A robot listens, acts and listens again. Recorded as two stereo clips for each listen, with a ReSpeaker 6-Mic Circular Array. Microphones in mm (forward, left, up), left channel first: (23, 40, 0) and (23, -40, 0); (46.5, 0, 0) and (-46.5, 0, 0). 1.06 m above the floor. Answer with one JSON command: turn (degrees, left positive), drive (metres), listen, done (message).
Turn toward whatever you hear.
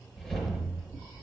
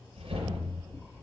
{"turn": 170}
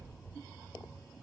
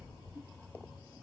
{"turn": -15}
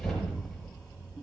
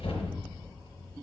{"done": "Found it: a whoosh, straight ahead."}